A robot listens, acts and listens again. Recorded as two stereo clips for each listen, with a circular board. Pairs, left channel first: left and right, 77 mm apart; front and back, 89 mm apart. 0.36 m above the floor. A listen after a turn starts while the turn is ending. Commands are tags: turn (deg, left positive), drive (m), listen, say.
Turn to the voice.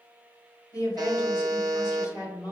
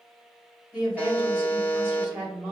<turn deg="115"/>
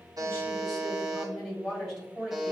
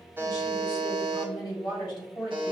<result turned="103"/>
<turn deg="10"/>
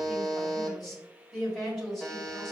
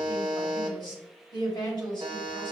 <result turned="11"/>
<say>Facing the woman speaking, 2 to 4 m away.</say>